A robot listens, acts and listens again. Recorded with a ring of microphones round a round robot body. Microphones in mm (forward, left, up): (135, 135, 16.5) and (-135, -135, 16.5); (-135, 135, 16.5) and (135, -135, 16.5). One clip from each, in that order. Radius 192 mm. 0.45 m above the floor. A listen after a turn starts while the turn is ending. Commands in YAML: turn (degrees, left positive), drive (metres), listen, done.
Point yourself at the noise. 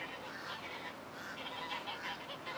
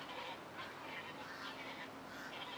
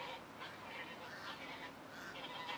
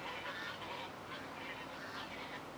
listen: true
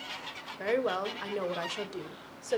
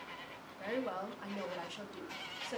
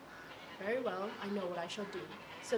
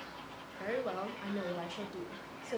turn: 75
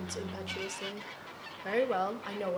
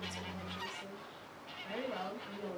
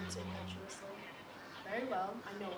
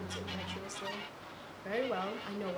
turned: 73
turn: 25
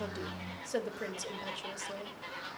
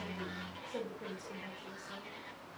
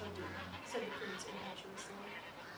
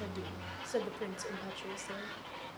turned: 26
done: "Facing the woman speaking."